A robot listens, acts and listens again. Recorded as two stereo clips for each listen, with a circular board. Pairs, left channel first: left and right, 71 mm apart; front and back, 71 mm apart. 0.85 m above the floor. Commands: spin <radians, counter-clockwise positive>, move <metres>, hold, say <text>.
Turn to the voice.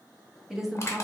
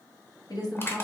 say Found it: a woman speaking, straight ahead, under 1 m away.